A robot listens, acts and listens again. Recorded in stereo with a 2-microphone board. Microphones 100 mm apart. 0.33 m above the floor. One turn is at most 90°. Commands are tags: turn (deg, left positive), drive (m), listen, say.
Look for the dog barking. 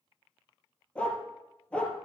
<turn deg="30"/>
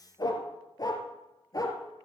<turn deg="90"/>
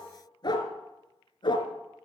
<turn deg="50"/>
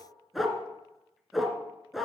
<say>Found it: a dog barking, straight ahead, 1 to 2 m away.</say>